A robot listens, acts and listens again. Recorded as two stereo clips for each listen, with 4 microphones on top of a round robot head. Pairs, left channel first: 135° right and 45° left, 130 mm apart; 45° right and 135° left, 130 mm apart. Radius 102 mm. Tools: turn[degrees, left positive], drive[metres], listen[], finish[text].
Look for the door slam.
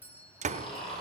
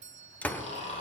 Thought: The door slam: 35° left.
Action: turn[35]
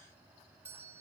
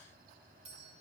Action: finish[Facing where the door slam came from. I can't hear it now.]